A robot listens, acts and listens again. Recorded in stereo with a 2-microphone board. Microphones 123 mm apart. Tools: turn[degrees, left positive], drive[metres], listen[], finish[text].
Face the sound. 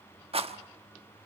Thought: The rattle: about 55° right or 125° right.
Action: turn[-55]
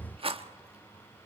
Thought: So it is at 60° right.
Action: turn[-60]
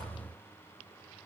Action: listen[]
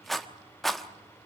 Action: finish[Found it: a rattle, straight ahead.]